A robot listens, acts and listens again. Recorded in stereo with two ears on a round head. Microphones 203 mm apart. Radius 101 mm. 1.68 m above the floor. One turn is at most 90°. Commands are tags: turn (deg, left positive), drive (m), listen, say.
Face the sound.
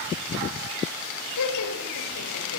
<turn deg="90"/>
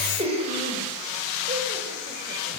<turn deg="-30"/>
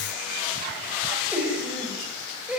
<say>Found it: laughter, straight ahead.</say>